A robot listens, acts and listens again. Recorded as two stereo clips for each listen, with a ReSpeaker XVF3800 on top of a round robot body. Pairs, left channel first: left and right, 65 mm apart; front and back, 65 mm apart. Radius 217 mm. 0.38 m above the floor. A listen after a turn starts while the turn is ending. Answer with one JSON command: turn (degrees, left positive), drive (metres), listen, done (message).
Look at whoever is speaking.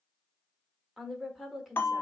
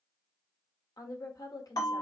{"done": "Facing the woman speaking."}